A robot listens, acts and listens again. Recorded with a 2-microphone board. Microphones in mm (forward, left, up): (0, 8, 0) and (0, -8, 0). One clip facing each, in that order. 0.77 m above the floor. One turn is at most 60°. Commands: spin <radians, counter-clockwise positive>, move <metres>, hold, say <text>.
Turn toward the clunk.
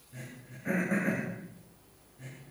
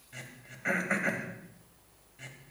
hold
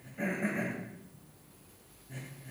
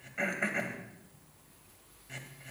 hold
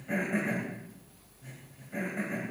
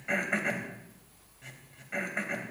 say I can't make out a clunk, only throat clearing.